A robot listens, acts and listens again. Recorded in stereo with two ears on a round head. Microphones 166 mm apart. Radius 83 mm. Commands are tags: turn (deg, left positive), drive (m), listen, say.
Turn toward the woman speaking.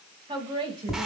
<turn deg="-30"/>
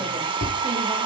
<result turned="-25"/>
<listen/>
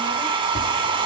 <listen/>
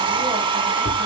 <say>I heard a woman speaking, but can't make it out now. It was about 5° right or 125° right.</say>